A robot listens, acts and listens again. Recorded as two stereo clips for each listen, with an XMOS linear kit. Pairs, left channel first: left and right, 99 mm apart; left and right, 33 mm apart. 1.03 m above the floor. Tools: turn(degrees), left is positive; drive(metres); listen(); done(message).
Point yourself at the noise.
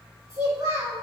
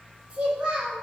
turn(degrees=-30)
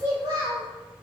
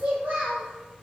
turn(degrees=-130)
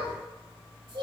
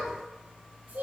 turn(degrees=-55)
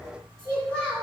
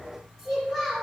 done("Facing the child speaking.")